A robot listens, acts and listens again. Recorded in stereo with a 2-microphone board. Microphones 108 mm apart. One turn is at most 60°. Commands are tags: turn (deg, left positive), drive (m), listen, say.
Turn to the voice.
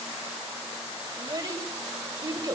<turn deg="-35"/>
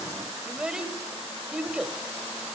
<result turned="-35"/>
<turn deg="-10"/>
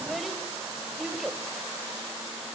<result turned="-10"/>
<say>Facing the child speaking.</say>